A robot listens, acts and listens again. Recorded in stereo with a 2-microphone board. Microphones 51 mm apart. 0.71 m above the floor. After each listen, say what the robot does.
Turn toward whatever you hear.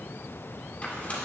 Keep listening.
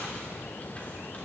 Keep listening.
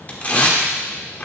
Turn 30° left.
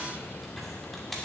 Keep listening.
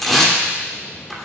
Facing the tearing paper, 1 to 2 m away.